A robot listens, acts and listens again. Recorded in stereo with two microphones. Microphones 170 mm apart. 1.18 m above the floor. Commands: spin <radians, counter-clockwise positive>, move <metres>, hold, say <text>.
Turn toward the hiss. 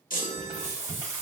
spin -0.87
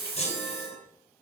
spin -1.40
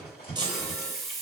say Facing the hiss.